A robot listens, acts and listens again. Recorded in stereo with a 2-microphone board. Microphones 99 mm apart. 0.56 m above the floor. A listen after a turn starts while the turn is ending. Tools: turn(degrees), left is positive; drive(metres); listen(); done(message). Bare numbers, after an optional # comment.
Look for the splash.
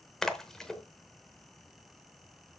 turn(30)
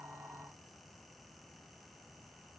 listen()
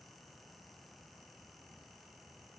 done("I heard a splash, but can't make it out now. It was about 25° right or 145° left.")